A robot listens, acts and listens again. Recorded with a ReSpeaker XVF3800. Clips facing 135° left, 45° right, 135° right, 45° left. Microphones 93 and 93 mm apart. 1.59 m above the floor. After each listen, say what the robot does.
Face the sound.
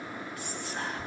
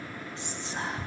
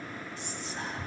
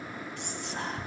Turn 20° left.
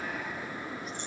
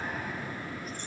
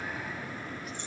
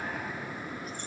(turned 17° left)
Keep listening.
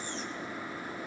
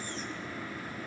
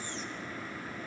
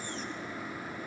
Keep listening.
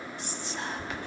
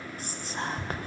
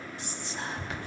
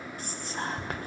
Found it: whispering, straight ahead.